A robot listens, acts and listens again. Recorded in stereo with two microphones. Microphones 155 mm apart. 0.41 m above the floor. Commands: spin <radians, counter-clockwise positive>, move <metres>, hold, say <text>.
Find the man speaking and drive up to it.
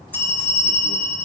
hold
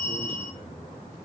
hold
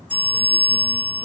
say I can't make out a man speaking to turn to.